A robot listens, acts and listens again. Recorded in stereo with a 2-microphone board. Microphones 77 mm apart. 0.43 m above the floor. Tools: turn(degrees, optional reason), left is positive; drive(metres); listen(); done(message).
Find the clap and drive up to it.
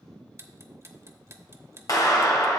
turn(degrees=50, reason="The clap: about 50° left or 130° left.")
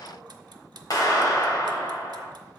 turn(degrees=70, reason="So it is at 70° left.")
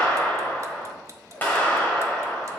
turn(degrees=25, reason="The clap is now 25° left.")
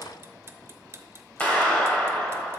turn(degrees=20, reason="The clap is now 20° left.")
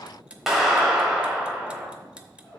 drive(metres=1.0)
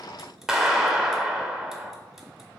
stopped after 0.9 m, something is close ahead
turn(degrees=-10, reason="The clap is now 10° right.")
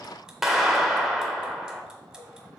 done("I am next to the clap.")